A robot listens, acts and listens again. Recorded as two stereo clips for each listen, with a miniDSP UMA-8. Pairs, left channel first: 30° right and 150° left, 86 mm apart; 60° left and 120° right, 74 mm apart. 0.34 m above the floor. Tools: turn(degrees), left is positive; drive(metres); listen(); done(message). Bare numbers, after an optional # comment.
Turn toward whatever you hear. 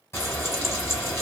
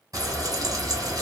# The frying: 85° right.
turn(-85)
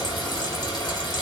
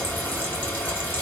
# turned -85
done("Found it: frying, straight ahead, 1 to 2 m away.")